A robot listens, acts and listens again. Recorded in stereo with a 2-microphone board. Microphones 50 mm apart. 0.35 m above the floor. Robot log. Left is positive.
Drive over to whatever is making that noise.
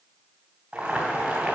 note: The boiling: about 20° right or 160° right.
cmd yaw -20
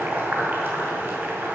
note: So it is at 130° right.
cmd yaw -130
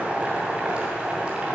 note: The boiling is now 30° right.
cmd yaw -30
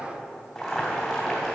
cmd fwd 1.0
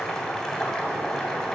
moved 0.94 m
note: The boiling is now 10° left.
cmd yaw +10
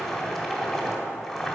cmd fwd 1.0
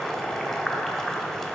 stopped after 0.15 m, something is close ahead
end: I am next to the boiling.